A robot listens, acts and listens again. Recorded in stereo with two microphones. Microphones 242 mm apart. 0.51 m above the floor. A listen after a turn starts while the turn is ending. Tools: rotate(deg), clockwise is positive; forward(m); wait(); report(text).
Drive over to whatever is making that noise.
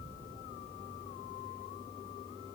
wait()
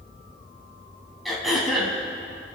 rotate(-30)
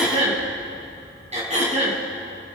rotate(30)
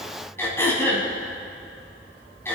rotate(-10)
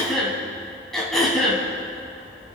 forward(1.0)
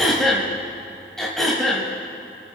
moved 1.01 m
forward(1.0)
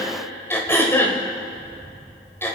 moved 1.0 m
rotate(-10)
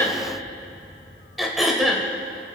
forward(1.0)
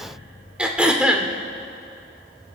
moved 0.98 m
forward(1.0)
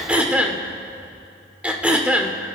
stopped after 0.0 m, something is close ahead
report("Arrived at the throat clearing, straight ahead.")